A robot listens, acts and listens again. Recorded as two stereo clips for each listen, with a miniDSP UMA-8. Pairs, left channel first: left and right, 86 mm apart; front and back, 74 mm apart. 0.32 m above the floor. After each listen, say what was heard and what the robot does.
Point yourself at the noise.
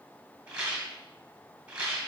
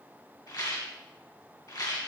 The rattle: 15° right. Turn 15° right.
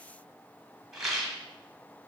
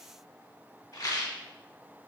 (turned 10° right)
Facing the rattle, 1 to 2 m away.